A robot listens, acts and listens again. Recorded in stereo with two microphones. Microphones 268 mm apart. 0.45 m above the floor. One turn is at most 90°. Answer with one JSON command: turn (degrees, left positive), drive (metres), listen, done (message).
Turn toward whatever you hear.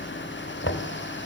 {"turn": 50}
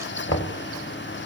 {"turn": 80}
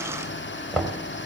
{"done": "Found it: knocking, straight ahead."}